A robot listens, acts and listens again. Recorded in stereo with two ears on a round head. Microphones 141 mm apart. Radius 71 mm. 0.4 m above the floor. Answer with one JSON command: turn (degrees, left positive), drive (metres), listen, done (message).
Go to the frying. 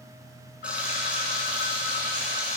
{"turn": -30}
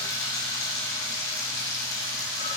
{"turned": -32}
{"turn": 25}
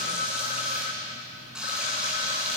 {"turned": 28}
{"drive": 1.0}
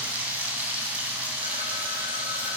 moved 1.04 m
{"turn": -10}
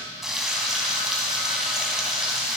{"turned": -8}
{"drive": 1.0}
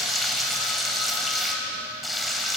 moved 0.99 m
{"drive": 1.0}
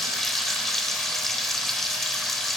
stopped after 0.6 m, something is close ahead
{"done": "I am next to the frying."}